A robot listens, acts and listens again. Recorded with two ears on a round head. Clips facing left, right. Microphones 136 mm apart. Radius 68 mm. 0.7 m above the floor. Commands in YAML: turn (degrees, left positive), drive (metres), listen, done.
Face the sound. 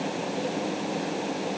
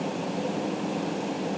listen: true
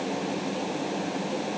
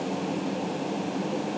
listen: true
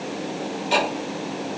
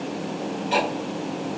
turn: 55
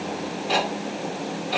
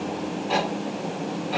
turn: 45
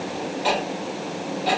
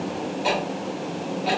done: "Facing the ticking, 1 to 2 m away."